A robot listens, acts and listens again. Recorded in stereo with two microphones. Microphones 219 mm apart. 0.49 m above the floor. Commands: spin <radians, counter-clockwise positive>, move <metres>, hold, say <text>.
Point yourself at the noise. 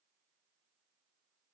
hold
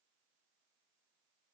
hold
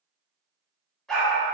spin 0.52
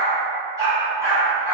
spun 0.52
spin -0.17
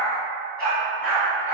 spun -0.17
say Found it: a dog barking, straight ahead.